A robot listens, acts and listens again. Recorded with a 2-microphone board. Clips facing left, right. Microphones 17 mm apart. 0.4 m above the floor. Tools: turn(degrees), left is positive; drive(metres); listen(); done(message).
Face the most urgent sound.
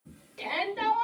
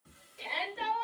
turn(degrees=50)
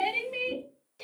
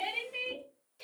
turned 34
turn(degrees=35)
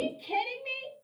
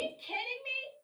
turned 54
turn(degrees=-20)
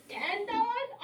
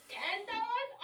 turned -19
done("Found it: a shout, straight ahead.")